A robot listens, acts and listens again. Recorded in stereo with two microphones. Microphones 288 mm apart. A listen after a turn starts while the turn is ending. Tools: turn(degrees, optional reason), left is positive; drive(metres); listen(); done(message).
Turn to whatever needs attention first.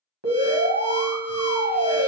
turn(degrees=-55, reason="The alarm: about 55° right or 125° right.")
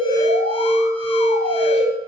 turn(degrees=-65, reason="So it is at 65° right.")
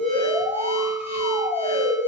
done("Facing the alarm, 1 to 2 m away.")